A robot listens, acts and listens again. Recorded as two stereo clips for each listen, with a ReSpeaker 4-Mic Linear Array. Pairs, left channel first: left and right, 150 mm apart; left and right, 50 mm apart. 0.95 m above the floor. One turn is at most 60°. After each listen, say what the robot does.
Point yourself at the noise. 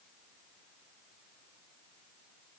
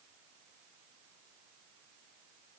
Keep listening.
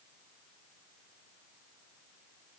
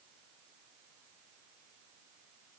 Keep listening.
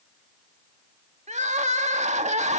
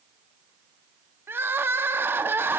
Turn 55° right.
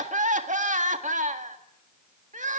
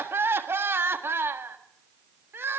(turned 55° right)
Turn 60° right.
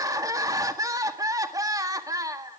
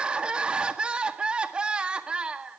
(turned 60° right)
Turn 25° right.
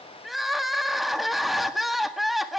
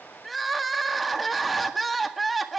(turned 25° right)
Found it: crying, straight ahead, 1 to 2 m away.